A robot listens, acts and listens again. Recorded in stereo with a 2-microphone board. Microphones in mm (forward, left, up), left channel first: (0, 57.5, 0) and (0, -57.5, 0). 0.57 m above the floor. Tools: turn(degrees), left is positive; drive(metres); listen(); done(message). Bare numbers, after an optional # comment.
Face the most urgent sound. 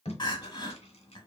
# The crying: about 40° left or 140° left.
turn(40)
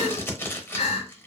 # So it is at 90° left.
turn(90)
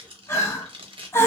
# The crying is now 25° left.
turn(25)
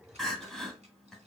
done("Facing the crying.")